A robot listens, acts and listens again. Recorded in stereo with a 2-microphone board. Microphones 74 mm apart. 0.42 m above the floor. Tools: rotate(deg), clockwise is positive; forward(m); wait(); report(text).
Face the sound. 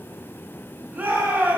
rotate(20)
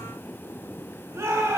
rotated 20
rotate(140)
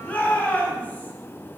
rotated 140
rotate(-20)
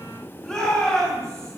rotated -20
rotate(-10)
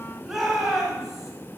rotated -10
report("Found it: a shout, straight ahead.")